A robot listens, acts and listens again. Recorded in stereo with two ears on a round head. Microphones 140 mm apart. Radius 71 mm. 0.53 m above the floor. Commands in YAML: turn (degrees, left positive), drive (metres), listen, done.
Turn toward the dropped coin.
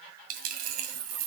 turn: -60
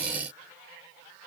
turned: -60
listen: true
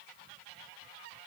done: "I heard a dropped coin, but can't make it out now. It was about straight ahead or 60° right."